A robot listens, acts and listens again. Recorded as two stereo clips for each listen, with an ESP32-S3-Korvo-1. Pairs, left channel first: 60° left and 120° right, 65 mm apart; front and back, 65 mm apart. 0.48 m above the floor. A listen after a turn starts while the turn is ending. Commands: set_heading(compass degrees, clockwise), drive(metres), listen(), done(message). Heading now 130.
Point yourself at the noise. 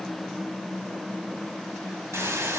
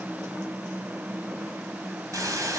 set_heading(285)
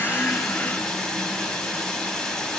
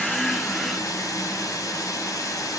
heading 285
set_heading(295)
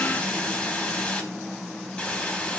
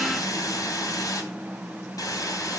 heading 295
done("Found it: a hiss, straight ahead, 2 to 4 m away.")